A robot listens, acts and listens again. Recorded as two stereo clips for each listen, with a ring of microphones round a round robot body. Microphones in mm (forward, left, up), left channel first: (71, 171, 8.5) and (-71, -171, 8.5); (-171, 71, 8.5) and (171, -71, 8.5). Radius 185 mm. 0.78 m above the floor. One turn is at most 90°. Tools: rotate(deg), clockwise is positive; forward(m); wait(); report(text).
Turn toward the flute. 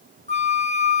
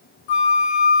rotate(-90)
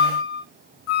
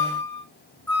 rotate(-75)
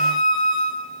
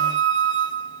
report("Found it: a flute, straight ahead, 2 to 4 m away.")